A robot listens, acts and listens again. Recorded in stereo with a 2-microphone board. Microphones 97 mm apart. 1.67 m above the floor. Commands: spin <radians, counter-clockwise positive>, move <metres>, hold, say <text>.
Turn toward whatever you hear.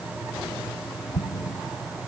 spin 0.44
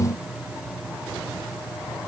hold
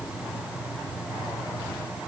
say I heard an explosion, but can't make it out now. It was about straight ahead or 130° left.